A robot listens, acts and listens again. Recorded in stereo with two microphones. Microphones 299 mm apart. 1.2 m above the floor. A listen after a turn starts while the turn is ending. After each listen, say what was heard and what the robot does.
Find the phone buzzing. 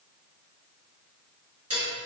Keep listening.
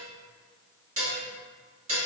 Keep listening.
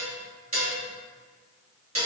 I can't make out a phone buzzing, only dishes clattering.